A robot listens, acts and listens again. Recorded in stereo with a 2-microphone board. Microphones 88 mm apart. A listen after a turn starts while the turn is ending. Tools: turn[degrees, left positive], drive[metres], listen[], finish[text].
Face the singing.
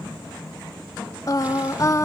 Thought: The singing: about 40° left or 140° left.
Action: turn[40]
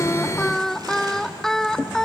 Action: finish[Facing the singing, under 1 m away.]